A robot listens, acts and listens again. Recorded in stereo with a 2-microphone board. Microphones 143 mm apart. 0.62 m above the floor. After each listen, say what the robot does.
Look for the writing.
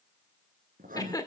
Turn 90° right.
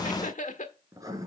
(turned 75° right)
Turn 25° right.
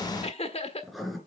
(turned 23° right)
Found it: writing, straight ahead, 2 to 4 m away.